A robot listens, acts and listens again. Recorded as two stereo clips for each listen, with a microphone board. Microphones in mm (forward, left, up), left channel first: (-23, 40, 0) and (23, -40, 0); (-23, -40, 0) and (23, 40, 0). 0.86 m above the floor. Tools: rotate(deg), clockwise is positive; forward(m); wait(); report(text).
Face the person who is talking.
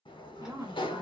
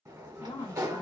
rotate(115)
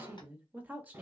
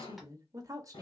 rotate(-10)
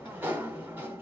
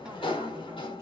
wait()
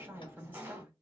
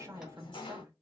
report("Facing the woman speaking.")